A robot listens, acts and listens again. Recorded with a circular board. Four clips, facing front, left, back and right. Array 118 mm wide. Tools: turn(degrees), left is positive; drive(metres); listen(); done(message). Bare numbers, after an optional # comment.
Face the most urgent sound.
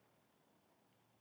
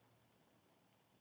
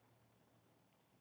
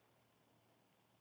listen()
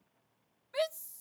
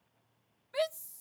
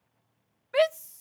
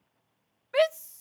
# The shout: 135° right.
turn(-135)
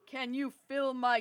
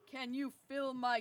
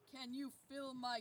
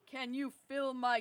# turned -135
# The shout is now 10° right.
turn(-10)
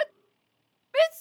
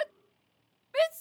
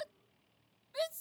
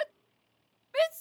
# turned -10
done("Facing the shout.")